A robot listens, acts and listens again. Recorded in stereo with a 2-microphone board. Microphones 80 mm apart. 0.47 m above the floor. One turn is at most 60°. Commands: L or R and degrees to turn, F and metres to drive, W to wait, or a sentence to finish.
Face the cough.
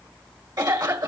R60
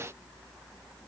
W
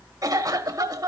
R50
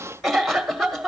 Found it: a cough, straight ahead, 1 to 2 m away.